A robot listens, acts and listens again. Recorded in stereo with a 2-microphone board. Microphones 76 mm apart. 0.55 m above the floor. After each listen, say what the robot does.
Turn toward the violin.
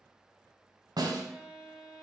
Turn 30° right.
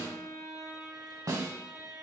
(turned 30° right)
Turn 135° right.
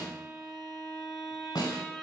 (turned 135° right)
Facing the violin.